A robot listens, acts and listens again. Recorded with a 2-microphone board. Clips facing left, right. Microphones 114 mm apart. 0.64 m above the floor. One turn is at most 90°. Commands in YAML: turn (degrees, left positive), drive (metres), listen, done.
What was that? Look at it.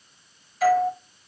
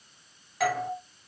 turn: -70
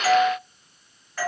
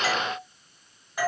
turn: -15
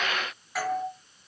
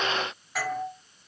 done: "Found it: a doorbell, straight ahead."